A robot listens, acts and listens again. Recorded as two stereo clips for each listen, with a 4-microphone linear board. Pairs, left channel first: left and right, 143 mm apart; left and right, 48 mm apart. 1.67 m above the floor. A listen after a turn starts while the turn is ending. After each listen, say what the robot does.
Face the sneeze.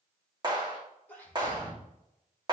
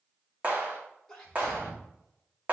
Turn 30° left.
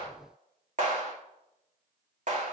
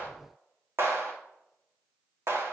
Keep listening.
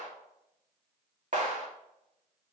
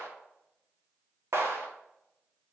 I heard a sneeze, but can't make it out now. It was about 20° right or 140° left.